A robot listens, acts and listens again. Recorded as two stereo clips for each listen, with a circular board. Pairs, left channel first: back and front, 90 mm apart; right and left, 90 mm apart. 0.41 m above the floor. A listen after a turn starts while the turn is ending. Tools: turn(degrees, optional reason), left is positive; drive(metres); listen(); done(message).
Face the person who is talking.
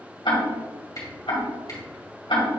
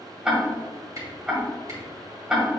listen()
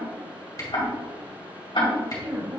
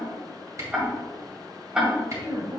turn(degrees=55, reason="The woman speaking: 55° left.")
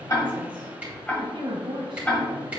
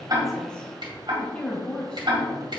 turn(degrees=-10, reason="The woman speaking is now 10° right.")
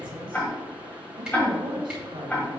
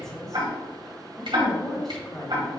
done("Facing the woman speaking.")